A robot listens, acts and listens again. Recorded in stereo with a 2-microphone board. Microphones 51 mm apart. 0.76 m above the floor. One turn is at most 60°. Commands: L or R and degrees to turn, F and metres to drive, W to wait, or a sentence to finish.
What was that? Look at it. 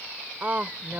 R30
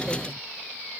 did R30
W
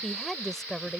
L10
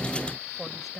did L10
Facing the woman speaking.